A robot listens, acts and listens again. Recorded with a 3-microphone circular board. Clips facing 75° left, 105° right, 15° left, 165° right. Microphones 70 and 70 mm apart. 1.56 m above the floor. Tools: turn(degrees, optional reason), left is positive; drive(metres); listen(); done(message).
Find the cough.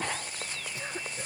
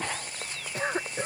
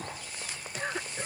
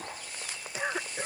turn(degrees=-90, reason="The cough: 90° right.")
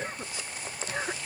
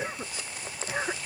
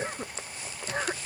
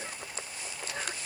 turn(degrees=-30, reason="The cough is now 30° right.")
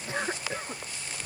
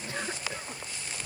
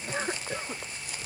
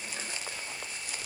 turn(degrees=15, reason="The cough is now 15° left.")
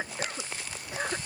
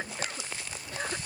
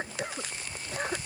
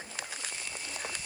done("Found it: a cough, straight ahead.")